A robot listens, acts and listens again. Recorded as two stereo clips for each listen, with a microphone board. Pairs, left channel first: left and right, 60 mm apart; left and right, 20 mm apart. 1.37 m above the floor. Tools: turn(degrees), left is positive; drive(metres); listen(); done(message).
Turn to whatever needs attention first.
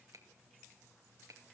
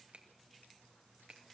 listen()
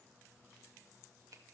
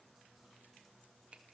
listen()
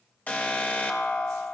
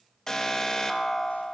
turn(degrees=25)
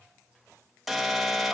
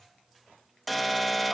done("Facing the alarm.")